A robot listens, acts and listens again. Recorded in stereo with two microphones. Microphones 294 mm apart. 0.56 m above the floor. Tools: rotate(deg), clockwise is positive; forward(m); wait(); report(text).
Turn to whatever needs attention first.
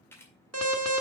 rotate(60)
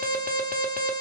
rotate(35)
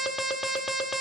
report("Facing the alarm.")